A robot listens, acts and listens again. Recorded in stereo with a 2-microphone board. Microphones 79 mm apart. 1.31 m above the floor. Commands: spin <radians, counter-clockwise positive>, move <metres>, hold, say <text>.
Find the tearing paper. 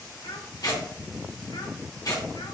spin 0.87
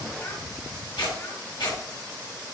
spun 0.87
spin 1.31
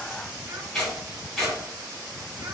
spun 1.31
say Found it: tearing paper, straight ahead, 2 to 4 m away.